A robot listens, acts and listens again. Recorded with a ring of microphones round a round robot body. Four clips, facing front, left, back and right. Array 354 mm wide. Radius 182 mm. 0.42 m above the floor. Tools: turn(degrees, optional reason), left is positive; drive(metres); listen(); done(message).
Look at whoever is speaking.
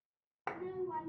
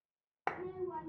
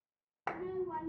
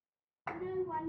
turn(degrees=-95, reason="The child speaking: 95° right.")
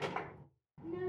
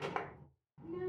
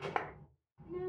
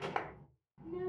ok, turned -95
done("Facing the child speaking.")